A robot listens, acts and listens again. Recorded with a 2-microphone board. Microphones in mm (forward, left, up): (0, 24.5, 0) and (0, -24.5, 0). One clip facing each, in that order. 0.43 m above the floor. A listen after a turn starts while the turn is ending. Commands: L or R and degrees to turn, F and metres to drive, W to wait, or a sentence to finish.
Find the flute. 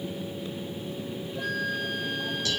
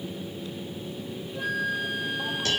R30
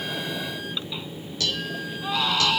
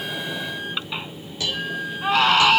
R140
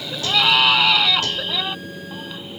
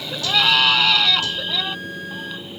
W
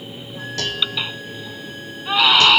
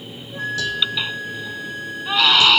R65
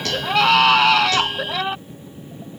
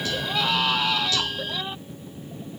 W
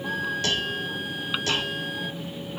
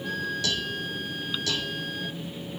L15
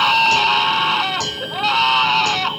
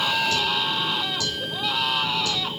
W
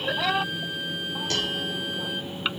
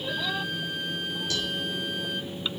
Found it: a flute, straight ahead.